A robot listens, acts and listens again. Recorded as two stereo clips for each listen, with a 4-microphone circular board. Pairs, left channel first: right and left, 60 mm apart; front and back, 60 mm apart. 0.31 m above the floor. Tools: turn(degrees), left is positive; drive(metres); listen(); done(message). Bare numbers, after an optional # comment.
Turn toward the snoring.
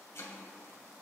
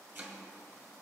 listen()
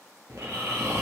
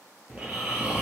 # The snoring: 115° left.
turn(115)
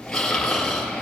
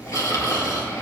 # The snoring is now 10° right.
turn(-10)
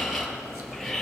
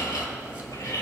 done("Found it: snoring, straight ahead, 2 to 4 m away.")